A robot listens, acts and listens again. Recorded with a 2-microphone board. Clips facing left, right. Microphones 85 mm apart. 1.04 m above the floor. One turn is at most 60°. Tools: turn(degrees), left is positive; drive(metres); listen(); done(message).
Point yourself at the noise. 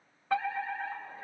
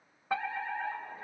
turn(degrees=-15)
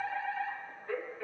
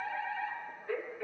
done("Found it: a fire alarm, straight ahead, 2 to 4 m away.")